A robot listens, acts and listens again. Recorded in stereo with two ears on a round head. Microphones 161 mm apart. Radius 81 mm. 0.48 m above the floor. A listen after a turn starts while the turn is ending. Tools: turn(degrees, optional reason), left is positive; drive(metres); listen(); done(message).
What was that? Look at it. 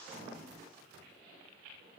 listen()
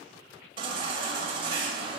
turn(degrees=-30, reason="The baby crying: about 30° right or 150° right.")
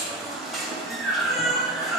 done("Facing the baby crying.")